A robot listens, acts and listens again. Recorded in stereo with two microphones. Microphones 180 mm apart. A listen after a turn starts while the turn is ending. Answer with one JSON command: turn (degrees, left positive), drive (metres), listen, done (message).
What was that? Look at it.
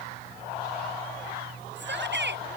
{"turn": -90}
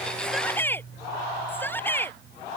{"turn": 10}
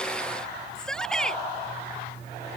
{"done": "Facing the shout."}